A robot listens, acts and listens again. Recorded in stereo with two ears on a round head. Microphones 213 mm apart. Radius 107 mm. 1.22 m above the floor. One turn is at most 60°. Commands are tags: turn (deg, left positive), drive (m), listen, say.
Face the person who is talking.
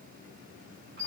<listen/>
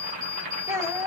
<turn deg="-30"/>
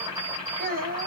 <turn deg="-60"/>
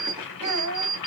<turn deg="-60"/>
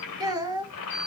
<turn deg="-15"/>
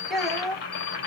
<say>Facing the child speaking.</say>